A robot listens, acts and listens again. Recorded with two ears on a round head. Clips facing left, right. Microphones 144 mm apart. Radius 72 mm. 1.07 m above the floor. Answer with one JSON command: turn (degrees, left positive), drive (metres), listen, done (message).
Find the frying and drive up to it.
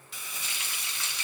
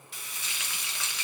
{"turn": -70}
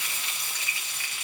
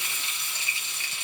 {"turn": -25}
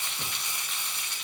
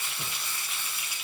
{"drive": 1.0}
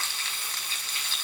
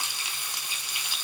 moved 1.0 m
{"turn": -15}
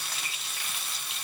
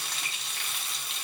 {"drive": 1.0}
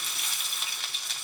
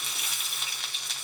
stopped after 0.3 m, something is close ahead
{"done": "I am next to the frying."}